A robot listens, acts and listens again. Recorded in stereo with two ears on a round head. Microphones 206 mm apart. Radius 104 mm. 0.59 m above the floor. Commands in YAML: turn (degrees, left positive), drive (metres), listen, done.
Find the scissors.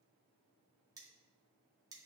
listen: true
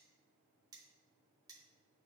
listen: true
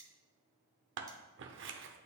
turn: -55
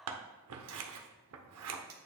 turn: -70
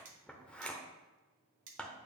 done: "Facing the scissors, under 1 m away."